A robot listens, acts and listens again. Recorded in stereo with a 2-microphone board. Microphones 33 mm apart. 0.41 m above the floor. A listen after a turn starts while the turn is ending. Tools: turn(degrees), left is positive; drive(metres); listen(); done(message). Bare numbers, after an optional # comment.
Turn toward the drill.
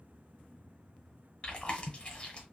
listen()
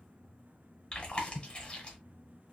listen()
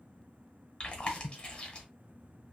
done("I can't make out a drill to turn to.")